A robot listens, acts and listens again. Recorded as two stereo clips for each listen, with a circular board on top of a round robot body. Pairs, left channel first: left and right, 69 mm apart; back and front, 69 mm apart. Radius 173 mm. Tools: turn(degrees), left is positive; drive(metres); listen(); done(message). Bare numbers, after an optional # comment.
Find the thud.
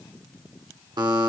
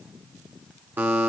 listen()
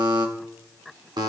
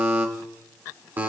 listen()
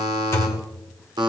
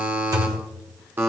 # The thud: 35° left.
turn(35)
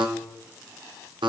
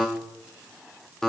done("Facing where the thud came from. I can't hear it now.")